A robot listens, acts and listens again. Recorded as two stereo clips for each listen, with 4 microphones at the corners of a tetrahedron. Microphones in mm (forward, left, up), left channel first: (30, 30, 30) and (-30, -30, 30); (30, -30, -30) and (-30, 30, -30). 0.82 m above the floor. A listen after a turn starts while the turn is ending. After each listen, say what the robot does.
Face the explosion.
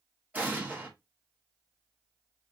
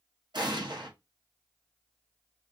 Turn 155° left.
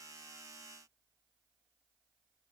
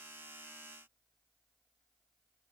I heard an explosion from this way, but can't make it out now.